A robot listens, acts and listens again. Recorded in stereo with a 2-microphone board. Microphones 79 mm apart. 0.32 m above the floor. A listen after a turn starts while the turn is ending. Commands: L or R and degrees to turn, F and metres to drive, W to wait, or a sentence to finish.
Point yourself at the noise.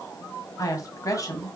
L45
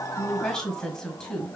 L10
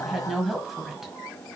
Found it: a woman speaking, straight ahead.